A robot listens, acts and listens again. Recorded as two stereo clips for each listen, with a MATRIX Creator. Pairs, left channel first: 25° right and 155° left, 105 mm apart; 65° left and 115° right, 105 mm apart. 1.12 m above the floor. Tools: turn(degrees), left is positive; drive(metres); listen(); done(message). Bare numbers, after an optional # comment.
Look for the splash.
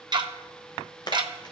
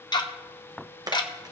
# The splash: 65° right.
turn(-65)
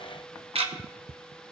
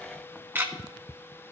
done("Facing where the splash came from. I can't hear it now.")